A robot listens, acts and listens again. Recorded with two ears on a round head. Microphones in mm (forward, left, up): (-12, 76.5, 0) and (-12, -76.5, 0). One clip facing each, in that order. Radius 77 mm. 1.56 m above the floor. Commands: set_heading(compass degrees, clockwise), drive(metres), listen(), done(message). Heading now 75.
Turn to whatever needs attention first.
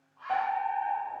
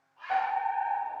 set_heading(50)
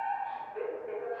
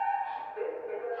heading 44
set_heading(284)
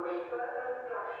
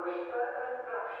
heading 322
set_heading(282)
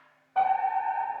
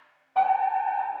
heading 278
done("Facing the fire alarm.")